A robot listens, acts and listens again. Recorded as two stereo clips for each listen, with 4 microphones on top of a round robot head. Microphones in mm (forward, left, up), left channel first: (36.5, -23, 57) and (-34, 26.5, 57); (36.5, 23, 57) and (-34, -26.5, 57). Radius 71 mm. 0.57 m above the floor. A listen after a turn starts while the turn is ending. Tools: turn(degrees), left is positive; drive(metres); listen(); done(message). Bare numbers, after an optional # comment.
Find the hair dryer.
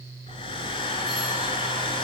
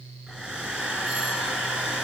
# The hair dryer: 65° right.
turn(-65)
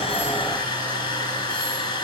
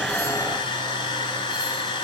done("Facing the hair dryer, 2 to 4 m away.")